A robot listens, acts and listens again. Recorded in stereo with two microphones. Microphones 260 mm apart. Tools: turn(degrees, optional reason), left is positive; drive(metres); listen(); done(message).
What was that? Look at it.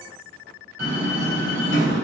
turn(degrees=-90)
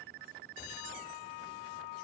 done("Facing where the door slam came from. I can't hear it now.")